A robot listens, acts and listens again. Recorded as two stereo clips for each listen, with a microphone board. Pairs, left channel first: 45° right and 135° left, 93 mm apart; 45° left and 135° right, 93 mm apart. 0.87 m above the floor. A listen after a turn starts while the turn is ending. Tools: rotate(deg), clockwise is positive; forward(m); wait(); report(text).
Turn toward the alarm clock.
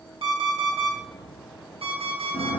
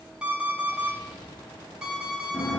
rotate(-145)
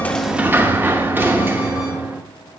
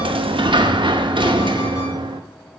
wait()
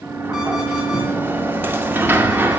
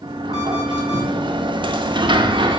wait()
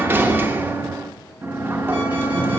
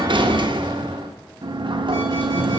report("Facing where the alarm clock came from. I can't hear it now.")